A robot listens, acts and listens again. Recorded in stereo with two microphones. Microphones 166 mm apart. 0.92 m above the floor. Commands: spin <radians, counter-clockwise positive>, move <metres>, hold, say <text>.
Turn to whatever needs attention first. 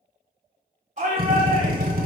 spin -0.79
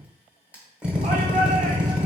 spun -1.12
hold
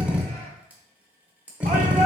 spin -1.22
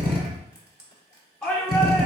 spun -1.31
say Found it: a shout, straight ahead, 1 to 2 m away.